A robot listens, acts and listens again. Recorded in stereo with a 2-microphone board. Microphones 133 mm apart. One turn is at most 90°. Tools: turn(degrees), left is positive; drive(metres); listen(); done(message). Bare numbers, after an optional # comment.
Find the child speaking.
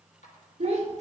# The child speaking: about 60° right or 120° right.
turn(-60)
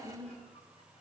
done("Facing the child speaking.")